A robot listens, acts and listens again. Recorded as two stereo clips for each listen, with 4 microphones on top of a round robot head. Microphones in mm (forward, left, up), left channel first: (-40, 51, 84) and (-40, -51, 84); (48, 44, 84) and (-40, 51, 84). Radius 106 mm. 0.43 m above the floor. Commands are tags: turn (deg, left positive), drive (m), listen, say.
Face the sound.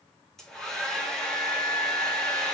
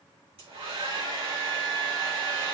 <turn deg="175"/>
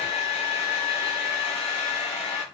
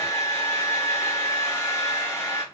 <turn deg="55"/>
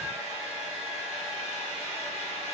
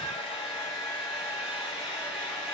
<turn deg="-25"/>
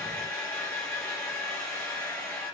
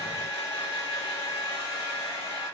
<turn deg="10"/>
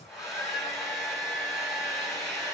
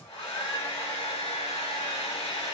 <say>Facing the hair dryer.</say>